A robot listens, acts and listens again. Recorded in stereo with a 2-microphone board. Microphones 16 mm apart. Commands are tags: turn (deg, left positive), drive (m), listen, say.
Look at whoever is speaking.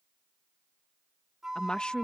<turn deg="60"/>
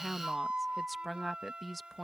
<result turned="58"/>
<say>Found it: a woman speaking, straight ahead.</say>